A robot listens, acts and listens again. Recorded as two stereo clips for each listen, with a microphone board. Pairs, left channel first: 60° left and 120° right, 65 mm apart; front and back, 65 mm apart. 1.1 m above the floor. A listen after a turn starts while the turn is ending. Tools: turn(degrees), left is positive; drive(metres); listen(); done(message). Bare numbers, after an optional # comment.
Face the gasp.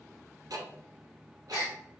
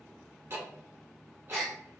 # The gasp: 85° left.
turn(85)
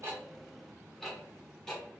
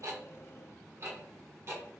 done("I heard a gasp from this way, but can't make it out now.")